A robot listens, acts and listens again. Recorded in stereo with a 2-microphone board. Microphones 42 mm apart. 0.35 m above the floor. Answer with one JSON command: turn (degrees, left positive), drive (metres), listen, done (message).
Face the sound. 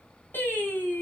{"turn": 60}
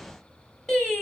{"turn": 20}
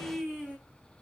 {"done": "Found it: singing, straight ahead, 2 to 4 m away."}